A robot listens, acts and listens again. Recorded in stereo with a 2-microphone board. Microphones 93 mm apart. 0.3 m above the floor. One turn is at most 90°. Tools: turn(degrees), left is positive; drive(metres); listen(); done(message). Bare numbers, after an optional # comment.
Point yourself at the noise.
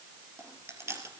# The chewing: about 30° right or 150° right.
turn(-30)
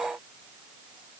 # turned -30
listen()
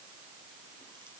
listen()
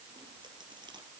done("I heard chewing, but can't make it out now. It was about straight ahead or 120° right.")